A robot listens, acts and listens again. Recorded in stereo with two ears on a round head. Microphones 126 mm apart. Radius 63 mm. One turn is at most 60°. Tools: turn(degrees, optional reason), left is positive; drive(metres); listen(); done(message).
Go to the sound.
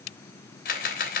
turn(degrees=60, reason="The camera shutter: about 65° left or 115° left.")
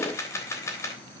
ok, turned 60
turn(degrees=20, reason="So it is at 20° left.")
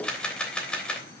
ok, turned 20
drive(metres=1.0)
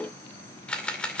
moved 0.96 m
turn(degrees=10, reason="The camera shutter is now 10° left.")
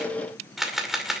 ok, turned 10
drive(metres=1.0)
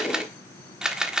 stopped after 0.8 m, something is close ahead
done("Arrived at the camera shutter, straight ahead.")